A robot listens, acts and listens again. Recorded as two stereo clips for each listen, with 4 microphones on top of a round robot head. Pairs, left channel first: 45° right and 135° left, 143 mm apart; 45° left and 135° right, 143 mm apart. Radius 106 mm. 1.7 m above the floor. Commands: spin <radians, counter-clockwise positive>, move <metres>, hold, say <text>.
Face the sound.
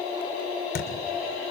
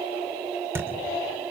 spin -1.05
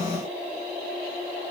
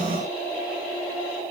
say I heard a thud from this way, but can't make it out now.